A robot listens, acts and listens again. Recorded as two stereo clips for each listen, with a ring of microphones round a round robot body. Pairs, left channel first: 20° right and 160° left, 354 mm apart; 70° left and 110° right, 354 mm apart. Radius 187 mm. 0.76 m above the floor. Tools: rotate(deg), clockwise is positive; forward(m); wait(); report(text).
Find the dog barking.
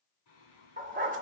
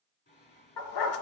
rotate(-90)
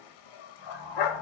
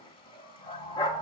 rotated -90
report("Facing the dog barking, under 1 m away.")